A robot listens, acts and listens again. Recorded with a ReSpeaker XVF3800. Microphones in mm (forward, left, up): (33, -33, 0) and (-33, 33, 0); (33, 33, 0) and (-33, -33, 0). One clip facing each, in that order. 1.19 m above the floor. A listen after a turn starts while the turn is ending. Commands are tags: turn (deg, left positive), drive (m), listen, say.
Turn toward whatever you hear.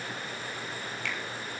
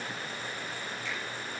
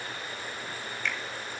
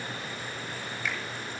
<turn deg="-50"/>
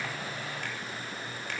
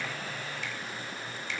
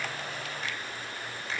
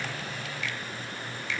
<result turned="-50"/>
<say>Found it: a finger snap, straight ahead.</say>